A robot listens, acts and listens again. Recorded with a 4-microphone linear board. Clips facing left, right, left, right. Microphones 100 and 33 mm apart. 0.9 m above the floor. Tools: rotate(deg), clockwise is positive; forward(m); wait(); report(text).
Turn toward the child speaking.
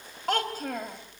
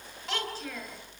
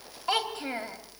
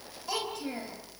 rotate(-50)
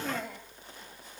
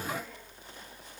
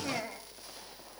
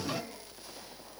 wait()
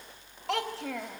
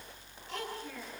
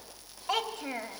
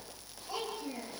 rotate(-80)
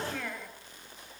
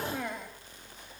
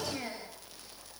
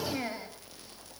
rotate(20)
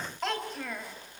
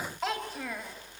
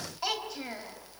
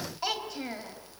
report("Found it: a child speaking, straight ahead, 2 to 4 m away.")